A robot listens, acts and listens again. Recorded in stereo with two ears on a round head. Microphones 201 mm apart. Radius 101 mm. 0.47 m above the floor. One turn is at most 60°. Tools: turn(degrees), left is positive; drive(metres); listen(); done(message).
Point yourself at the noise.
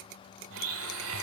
turn(degrees=-60)
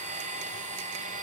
turn(degrees=-35)
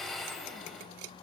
done("Found it: a blender, straight ahead.")